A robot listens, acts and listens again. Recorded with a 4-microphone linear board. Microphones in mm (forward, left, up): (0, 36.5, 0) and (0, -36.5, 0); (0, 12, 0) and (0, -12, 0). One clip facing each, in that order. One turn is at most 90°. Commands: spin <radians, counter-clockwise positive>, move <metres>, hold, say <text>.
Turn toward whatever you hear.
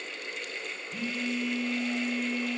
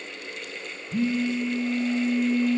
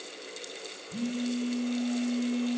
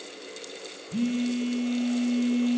spin -0.52
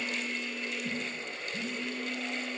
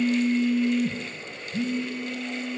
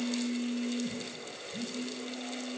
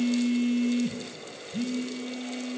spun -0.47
spin -1.57
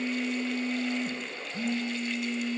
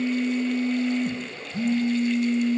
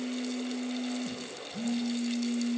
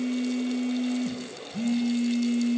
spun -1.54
spin -0.52
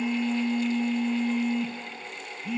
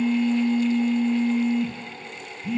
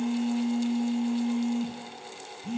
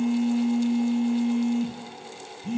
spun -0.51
say Facing the phone buzzing, 1 to 2 m away.